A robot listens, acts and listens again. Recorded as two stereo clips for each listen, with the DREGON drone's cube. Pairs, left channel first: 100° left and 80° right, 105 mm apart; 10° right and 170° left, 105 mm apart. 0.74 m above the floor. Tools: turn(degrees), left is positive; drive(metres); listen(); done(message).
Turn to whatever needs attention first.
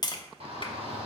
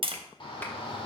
turn(degrees=-55)
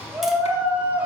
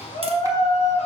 done("Facing the shout.")